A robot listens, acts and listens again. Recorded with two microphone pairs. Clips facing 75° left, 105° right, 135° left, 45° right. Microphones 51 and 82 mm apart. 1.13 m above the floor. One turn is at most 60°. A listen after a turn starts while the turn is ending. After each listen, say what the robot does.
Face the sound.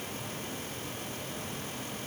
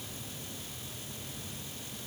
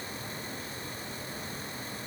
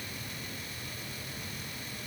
Keep listening.
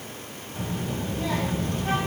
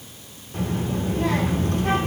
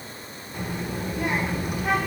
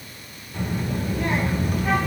Turn 60° right.
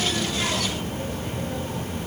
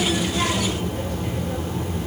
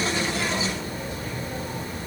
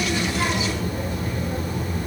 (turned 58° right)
Turn 60° right.
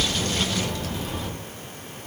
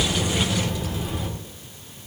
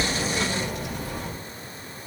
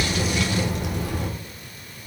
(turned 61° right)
Turn 30° right.
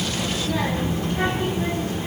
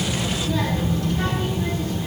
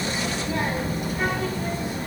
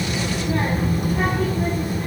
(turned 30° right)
Found it: a child speaking, straight ahead, 2 to 4 m away.